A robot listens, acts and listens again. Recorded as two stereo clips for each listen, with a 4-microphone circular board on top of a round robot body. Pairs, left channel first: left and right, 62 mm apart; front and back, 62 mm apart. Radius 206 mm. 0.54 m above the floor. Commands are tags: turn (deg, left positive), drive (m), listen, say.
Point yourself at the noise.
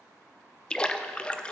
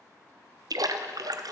<turn deg="165"/>
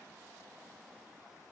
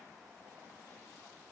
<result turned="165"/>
<say>Facing where the splash came from. I can't hear it now.</say>